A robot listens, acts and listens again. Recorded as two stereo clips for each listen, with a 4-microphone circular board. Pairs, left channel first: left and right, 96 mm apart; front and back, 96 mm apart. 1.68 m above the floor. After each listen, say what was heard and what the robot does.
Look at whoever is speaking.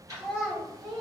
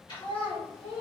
Facing the child speaking.